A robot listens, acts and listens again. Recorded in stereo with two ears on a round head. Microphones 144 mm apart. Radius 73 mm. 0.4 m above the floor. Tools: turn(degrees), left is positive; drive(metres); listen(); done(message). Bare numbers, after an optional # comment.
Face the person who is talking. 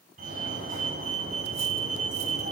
listen()
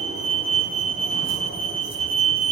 listen()
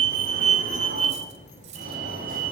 # The child speaking: about 50° left or 130° left.
turn(50)
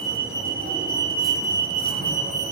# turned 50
listen()
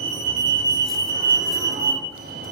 listen()
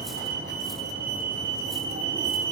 done("I heard a child speaking, but can't make it out now. It was about straight ahead or 80° left.")